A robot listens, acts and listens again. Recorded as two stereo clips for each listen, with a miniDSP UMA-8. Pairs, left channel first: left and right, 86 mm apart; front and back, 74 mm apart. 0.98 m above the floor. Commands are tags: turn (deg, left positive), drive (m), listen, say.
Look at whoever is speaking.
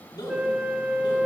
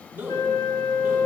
<turn deg="110"/>
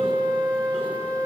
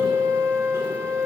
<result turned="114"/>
<listen/>
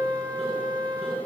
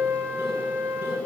<listen/>
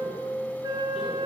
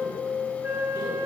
<say>Facing where the man speaking came from. I can't hear it now.</say>